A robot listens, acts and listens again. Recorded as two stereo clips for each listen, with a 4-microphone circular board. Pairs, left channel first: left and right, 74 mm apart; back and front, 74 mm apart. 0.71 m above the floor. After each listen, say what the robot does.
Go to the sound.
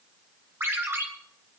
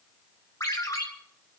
Turn 145° right.
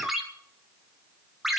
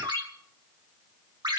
Drive 1.0 m forward.
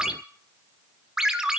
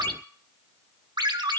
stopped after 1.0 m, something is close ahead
Turn 10° right.
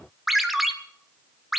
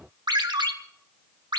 Arrived at the ringtone, straight ahead.